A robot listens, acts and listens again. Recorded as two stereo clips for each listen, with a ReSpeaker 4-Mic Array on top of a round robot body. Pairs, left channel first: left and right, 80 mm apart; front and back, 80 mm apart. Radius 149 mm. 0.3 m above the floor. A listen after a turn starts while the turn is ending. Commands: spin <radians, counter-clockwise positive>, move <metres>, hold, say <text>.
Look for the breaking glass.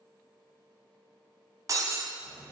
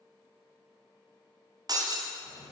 spin -2.44
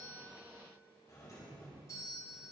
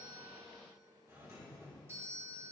say I heard breaking glass from this way, but can't make it out now.